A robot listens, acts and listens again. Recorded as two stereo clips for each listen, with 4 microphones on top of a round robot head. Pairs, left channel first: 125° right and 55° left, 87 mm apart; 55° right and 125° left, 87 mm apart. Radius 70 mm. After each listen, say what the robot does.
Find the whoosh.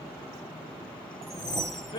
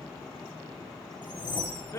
Turn 40° right.
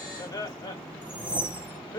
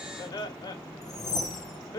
Turn 20° right.
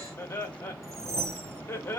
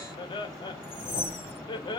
Found it: a whoosh, straight ahead.